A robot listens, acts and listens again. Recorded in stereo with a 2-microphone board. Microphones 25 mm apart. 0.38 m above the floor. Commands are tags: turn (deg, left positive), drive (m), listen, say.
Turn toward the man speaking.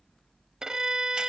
<listen/>
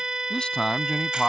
<turn deg="35"/>
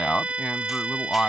<turn deg="105"/>
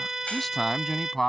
<turn deg="15"/>
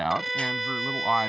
<say>Facing the man speaking.</say>